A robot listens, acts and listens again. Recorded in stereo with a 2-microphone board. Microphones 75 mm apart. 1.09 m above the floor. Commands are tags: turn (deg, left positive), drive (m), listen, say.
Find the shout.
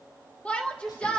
<turn deg="15"/>
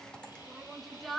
<say>Facing the shout.</say>